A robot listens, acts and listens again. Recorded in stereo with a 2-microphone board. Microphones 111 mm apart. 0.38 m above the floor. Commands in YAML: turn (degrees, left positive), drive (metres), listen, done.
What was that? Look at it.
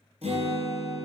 turn: -65
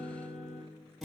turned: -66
done: "Found it: a guitar, straight ahead, 2 to 4 m away."